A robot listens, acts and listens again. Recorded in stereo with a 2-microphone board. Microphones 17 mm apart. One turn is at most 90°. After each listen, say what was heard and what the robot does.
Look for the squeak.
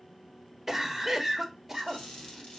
The squeak: about 55° left or 125° left. Turn 55° left.
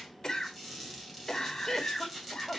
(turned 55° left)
Found it: a squeak, straight ahead.